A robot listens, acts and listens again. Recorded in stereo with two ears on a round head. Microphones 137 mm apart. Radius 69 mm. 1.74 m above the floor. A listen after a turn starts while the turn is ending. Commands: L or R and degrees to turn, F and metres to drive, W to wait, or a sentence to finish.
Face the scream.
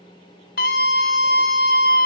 L65
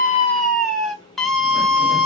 Facing the scream, under 1 m away.